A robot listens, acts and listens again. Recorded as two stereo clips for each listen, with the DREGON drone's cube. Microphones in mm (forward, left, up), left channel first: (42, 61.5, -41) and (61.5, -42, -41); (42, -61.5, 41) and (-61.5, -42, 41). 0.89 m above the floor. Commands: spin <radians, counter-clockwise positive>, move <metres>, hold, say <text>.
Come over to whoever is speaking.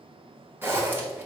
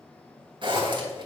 hold
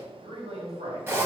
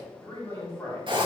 spin -1.31
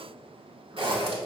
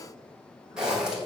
hold
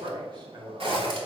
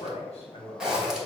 spin -0.61
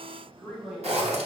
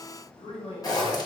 spin 0.17
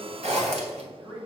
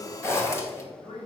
move 1.0
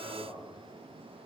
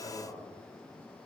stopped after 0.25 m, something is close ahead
say Blocked. The man speaking is further on, straight ahead.